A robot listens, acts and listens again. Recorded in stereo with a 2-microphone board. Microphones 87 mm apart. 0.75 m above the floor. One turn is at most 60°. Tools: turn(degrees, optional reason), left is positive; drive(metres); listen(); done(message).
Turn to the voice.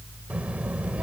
turn(degrees=-30)
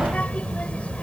turn(degrees=15, reason="So it is at 15° left.")
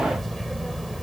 done("Found it: a child speaking, straight ahead.")